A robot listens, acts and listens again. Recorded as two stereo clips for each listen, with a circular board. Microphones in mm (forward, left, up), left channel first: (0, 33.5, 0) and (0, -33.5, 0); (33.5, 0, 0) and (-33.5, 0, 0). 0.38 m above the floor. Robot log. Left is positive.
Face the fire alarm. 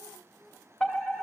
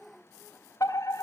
note: The fire alarm: 20° left.
cmd yaw +20
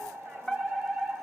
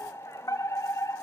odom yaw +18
end: Facing the fire alarm, 2 to 4 m away.